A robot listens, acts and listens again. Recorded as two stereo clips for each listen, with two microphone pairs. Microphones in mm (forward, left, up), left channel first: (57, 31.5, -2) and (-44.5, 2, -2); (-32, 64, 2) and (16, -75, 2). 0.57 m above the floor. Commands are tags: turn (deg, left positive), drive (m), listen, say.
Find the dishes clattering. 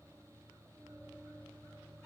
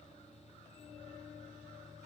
<listen/>
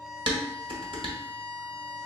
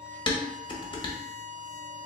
<turn deg="165"/>
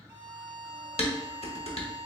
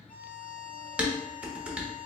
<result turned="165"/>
<turn deg="10"/>
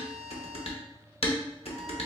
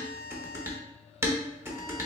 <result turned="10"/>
<say>Found it: dishes clattering, straight ahead.</say>